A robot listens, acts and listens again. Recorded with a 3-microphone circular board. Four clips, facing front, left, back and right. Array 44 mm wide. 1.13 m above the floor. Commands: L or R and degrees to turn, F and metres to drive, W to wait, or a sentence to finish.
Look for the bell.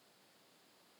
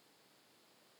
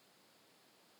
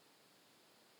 W
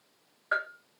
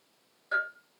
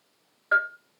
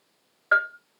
R90
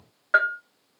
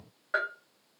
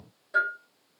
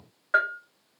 R15
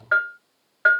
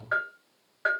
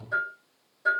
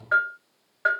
Found it: a bell, straight ahead, 1 to 2 m away.